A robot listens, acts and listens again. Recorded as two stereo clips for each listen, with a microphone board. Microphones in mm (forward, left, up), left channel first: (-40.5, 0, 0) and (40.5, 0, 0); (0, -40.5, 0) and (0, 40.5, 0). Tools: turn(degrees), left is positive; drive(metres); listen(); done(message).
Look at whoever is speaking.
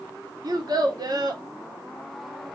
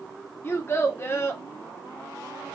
turn(degrees=-30)
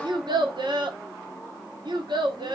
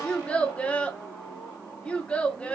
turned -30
turn(degrees=-15)
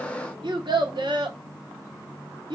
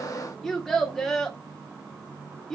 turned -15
done("Found it: a child speaking, straight ahead, 1 to 2 m away.")